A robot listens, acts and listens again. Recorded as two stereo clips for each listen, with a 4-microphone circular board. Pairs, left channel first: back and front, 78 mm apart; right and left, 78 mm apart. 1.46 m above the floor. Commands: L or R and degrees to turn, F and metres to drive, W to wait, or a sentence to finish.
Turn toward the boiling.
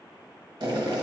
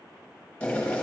R15
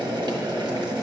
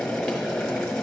Facing the boiling, 1 to 2 m away.